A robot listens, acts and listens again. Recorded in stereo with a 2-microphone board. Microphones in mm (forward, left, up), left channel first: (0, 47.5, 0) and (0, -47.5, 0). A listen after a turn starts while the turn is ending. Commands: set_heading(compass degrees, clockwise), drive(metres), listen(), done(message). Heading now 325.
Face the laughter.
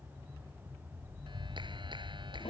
listen()
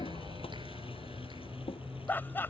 set_heading(300)
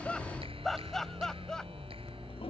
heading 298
done("Facing the laughter.")